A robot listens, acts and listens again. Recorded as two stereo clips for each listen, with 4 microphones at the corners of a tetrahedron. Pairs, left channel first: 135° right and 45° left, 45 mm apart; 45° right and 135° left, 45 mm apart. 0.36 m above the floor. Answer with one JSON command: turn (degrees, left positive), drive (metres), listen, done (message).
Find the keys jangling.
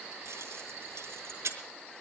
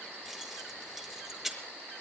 {"turn": 50}
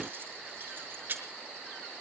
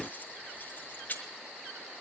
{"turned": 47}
{"done": "Found it: keys jangling, straight ahead."}